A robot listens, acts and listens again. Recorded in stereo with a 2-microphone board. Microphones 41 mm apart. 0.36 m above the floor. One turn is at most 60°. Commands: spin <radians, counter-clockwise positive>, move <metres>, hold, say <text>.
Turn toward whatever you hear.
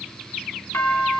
spin 1.05
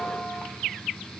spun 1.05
hold
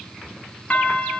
spin 0.52
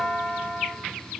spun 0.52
spin -0.17
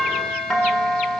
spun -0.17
say Found it: a doorbell, straight ahead, over 4 m away.